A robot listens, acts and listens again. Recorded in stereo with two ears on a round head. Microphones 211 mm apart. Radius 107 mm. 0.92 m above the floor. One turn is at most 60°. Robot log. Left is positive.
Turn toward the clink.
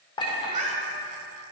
note: The clink: about 20° left or 160° left.
cmd yaw +20
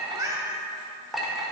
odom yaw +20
end: Facing the clink, 1 to 2 m away.